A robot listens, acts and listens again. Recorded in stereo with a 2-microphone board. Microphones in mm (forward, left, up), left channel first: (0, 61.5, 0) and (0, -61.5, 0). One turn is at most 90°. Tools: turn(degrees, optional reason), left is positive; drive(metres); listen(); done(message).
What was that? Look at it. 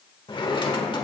turn(degrees=40, reason="The drawer: about 40° left or 140° left.")
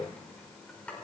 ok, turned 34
turn(degrees=10, reason="So it is at 10° left.")
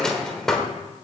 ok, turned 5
done("Facing the drawer.")